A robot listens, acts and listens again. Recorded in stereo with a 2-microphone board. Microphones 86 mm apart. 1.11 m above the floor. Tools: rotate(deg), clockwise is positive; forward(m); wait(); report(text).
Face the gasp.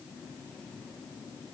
wait()
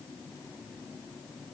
wait()
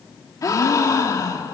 rotate(-45)
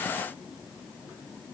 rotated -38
wait()
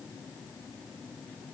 report("I heard a gasp, but can't make it out now. It was about 5° left or 100° left.")